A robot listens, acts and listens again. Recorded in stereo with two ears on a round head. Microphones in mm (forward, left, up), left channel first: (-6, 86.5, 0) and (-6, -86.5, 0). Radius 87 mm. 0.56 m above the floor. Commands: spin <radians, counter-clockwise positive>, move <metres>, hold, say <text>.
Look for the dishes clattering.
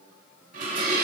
spin -0.79
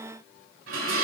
spin -1.57
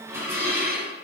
spin -0.26
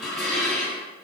say Found it: dishes clattering, straight ahead.